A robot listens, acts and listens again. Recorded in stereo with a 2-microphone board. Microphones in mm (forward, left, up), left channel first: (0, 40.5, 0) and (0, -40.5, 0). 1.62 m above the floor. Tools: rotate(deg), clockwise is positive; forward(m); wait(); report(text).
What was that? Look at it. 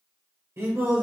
rotate(30)
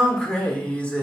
rotate(-20)
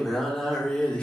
rotate(-20)
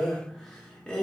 rotate(-15)
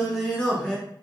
rotate(-15)
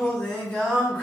rotate(-15)
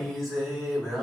report("Facing the singing, 1 to 2 m away.")